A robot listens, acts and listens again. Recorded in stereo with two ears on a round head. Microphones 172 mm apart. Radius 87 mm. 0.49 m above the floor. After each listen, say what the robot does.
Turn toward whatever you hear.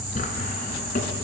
Turn 45° left.
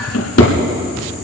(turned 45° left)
Turn 90° left.
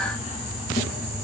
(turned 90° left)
Keep listening.
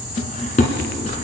Turn 40° left.
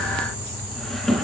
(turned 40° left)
Facing the drawer, 1 to 2 m away.